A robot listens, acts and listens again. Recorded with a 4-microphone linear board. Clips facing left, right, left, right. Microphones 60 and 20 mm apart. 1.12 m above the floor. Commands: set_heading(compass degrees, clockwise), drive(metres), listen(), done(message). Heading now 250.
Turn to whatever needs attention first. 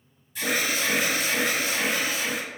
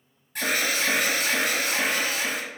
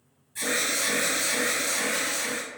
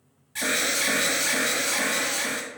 set_heading(305)
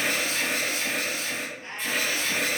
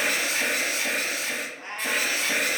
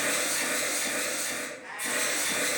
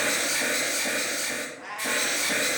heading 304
set_heading(14)
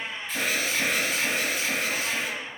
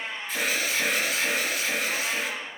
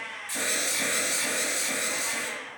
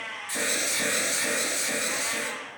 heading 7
done("Found it: an alarm, straight ahead.")